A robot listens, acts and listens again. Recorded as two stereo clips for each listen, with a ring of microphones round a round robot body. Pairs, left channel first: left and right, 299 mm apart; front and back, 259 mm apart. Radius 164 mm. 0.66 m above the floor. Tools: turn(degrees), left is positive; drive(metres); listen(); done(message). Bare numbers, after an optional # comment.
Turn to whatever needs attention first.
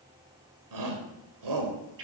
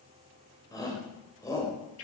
# The shout: 80° right.
turn(-80)
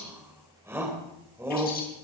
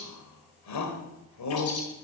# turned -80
# The shout is now 10° right.
turn(-10)
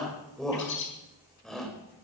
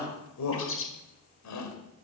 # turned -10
done("Facing the shout.")